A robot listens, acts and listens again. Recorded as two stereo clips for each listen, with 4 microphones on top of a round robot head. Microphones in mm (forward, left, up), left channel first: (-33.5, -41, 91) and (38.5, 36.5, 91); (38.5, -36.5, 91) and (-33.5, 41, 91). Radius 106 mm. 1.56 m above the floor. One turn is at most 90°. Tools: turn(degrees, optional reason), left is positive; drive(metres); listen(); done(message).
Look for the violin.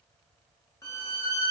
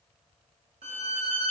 turn(degrees=90, reason="The violin: 165° left.")
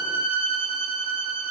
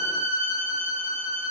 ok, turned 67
turn(degrees=90, reason="The violin is now 100° left.")
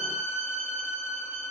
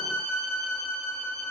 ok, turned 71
turn(degrees=25, reason="The violin is now 25° left.")
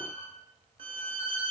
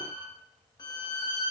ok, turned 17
done("Found it: a violin, straight ahead.")